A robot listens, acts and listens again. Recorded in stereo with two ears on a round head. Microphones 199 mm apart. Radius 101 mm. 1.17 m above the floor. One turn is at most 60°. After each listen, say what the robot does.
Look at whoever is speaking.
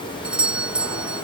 Keep listening.
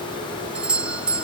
Keep listening.
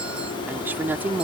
Turn 30° right.
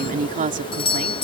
Turn 60° right.
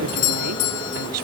Turn 60° right.
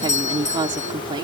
Turn 20° right.
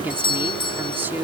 Turn 10° right.
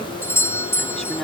Keep listening.
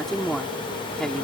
Found it: a woman speaking, straight ahead.